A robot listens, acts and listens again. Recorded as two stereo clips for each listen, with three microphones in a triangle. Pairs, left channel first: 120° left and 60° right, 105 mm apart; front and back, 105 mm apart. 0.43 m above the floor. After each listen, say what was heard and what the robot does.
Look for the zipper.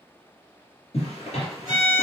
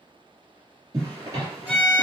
The zipper: 125° left. Turn 125° left.
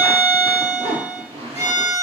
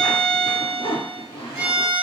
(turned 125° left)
The zipper is now 35° right. Turn 35° right.
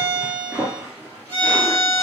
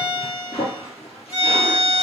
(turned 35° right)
The zipper is now 10° left. Turn 10° left.
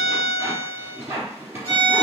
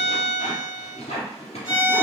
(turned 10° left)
Found it: a zipper, straight ahead, 2 to 4 m away.